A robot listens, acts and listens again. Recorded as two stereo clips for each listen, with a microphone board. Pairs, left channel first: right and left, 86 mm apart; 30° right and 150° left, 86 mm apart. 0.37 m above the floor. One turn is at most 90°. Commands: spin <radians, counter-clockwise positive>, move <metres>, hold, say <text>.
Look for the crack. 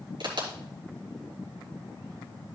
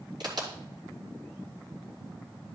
spin 1.57
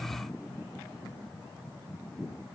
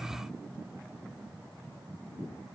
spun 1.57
spin 0.52
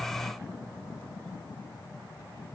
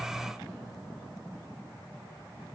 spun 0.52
say Facing where the crack came from. I can't hear it now.